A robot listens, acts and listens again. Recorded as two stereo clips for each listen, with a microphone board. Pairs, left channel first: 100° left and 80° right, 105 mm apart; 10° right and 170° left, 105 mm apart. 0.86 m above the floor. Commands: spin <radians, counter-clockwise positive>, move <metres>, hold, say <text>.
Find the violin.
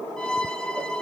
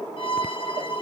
spin 0.35
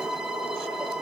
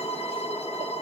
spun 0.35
say Found it: a violin, straight ahead.